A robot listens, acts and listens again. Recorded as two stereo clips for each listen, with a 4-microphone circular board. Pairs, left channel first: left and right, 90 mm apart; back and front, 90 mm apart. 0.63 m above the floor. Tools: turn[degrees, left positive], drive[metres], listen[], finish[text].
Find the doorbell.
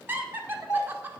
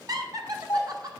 Thought: The doorbell: 130° left.
Action: turn[130]
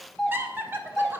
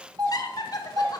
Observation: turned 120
Thought: The doorbell is now 10° left.
Action: turn[10]
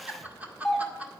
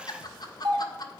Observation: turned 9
Action: finish[Facing the doorbell.]